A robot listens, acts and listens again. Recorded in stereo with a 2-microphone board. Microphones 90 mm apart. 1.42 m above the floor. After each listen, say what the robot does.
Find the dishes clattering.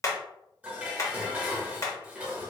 Turn 30° right.
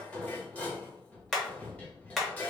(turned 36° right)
Turn 20° left.
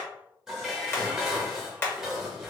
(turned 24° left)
Found it: dishes clattering, straight ahead.